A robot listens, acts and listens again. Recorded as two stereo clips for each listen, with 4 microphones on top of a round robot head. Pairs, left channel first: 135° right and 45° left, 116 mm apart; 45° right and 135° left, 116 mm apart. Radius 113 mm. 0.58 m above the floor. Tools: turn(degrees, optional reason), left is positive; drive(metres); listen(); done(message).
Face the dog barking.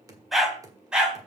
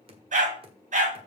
turn(degrees=125, reason="The dog barking: 125° left.")
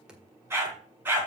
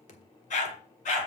turn(degrees=-30, reason="The dog barking is now 30° right.")
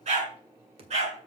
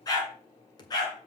turn(degrees=15, reason="The dog barking is now 15° left.")
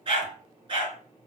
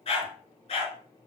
done("Facing the dog barking, over 4 m away.")